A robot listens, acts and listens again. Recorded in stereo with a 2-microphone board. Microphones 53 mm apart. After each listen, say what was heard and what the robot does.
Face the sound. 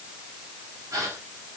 Turn 90° right.
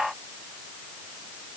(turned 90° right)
Facing where the gasp came from. I can't hear it now.